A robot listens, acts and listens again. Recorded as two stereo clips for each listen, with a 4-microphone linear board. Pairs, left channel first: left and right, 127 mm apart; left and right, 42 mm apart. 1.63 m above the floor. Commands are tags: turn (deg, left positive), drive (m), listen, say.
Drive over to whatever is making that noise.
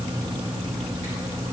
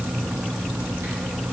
<listen/>
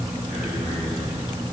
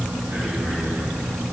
<turn deg="-90"/>
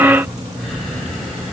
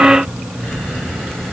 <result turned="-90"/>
<drive m="1.0"/>
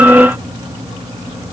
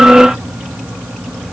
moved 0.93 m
<listen/>
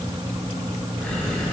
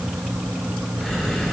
<drive m="1.0"/>
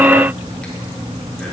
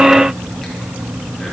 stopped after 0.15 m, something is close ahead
<listen/>
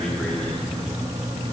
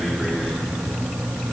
<listen/>
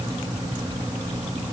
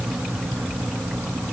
<say>Facing where the breathing came from. I can't hear it now. I did not reach it.</say>